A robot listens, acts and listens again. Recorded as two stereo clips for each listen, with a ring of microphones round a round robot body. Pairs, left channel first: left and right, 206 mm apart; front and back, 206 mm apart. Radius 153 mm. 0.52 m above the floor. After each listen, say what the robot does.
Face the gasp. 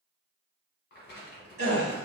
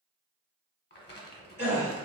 Turn 55° right.
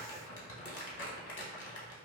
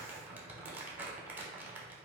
Facing where the gasp came from. I can't hear it now.